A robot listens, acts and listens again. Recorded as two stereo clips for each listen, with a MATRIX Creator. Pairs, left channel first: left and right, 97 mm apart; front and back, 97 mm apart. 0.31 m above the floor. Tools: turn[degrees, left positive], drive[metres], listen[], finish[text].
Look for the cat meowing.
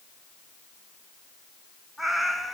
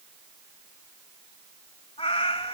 Action: finish[Found it: a cat meowing, straight ahead, 1 to 2 m away.]